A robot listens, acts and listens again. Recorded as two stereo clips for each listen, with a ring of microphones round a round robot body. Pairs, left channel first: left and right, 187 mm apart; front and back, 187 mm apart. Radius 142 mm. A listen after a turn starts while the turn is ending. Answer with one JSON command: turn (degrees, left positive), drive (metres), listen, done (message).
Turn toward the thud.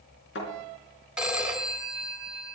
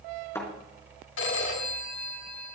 {"turn": 75}
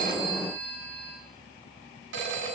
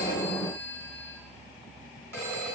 {"done": "I heard a thud from this way, but can't make it out now."}